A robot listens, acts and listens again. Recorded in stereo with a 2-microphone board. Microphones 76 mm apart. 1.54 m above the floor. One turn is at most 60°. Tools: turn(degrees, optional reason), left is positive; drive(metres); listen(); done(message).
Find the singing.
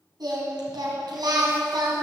turn(degrees=-60, reason="The singing: about 70° right or 110° right.")
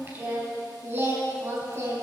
turn(degrees=-40, reason="So it is at 40° right.")
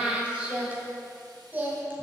turn(degrees=-25, reason="The singing is now 25° right.")
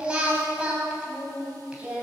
turn(degrees=-15, reason="The singing is now 15° right.")
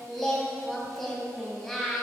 done("Found it: singing, straight ahead.")